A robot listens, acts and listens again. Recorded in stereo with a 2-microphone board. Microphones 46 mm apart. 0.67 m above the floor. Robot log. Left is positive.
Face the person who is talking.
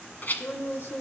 note: The woman speaking: about 55° left or 125° left.
cmd yaw +55
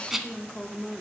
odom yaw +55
note: So it is at 25° left.
cmd yaw +25
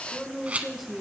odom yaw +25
end: Facing the woman speaking.